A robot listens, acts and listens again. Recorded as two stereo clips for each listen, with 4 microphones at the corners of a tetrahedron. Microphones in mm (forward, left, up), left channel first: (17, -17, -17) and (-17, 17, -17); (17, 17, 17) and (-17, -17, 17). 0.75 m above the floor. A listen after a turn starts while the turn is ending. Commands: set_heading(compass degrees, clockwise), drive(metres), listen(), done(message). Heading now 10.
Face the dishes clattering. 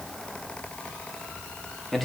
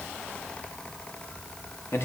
listen()
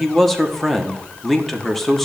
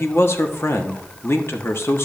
listen()
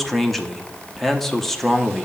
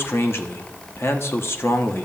done("I can't make out dishes clattering to turn to.")